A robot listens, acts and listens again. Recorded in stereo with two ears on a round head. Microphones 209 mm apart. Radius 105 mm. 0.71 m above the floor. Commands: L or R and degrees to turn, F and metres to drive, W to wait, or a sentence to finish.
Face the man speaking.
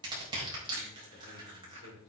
L50
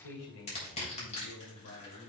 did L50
L65
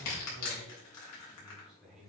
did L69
Found it: a man speaking, straight ahead.